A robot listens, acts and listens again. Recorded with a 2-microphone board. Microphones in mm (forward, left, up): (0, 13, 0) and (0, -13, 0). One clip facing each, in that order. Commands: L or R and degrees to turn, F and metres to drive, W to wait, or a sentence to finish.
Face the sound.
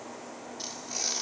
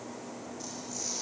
L60
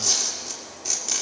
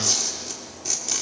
Found it: tearing paper, straight ahead, 2 to 4 m away.